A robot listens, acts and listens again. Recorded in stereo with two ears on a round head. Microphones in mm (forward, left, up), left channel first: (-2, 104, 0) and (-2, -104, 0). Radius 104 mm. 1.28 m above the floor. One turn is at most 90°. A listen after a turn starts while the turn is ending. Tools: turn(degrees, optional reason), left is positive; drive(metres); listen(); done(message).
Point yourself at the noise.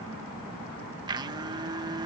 turn(degrees=-20, reason="The blender: about 20° right or 160° right.")
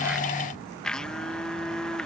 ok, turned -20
done("Facing the blender.")